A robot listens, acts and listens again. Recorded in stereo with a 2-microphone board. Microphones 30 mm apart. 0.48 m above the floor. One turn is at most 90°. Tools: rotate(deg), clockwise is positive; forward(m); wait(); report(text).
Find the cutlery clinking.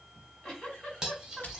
rotate(20)
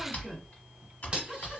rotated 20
rotate(90)
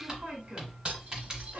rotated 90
rotate(50)
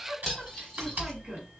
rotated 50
report("Facing the cutlery clinking.")